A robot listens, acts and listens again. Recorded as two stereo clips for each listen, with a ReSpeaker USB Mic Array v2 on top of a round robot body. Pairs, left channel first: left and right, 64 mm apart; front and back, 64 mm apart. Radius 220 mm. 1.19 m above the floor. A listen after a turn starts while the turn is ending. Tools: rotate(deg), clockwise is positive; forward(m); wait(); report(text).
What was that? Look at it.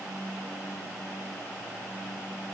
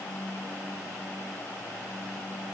wait()
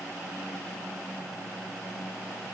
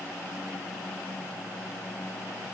wait()
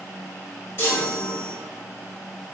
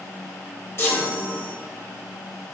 rotate(-45)
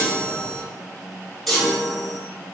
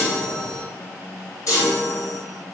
report("Found it: a chime, straight ahead, 1 to 2 m away.")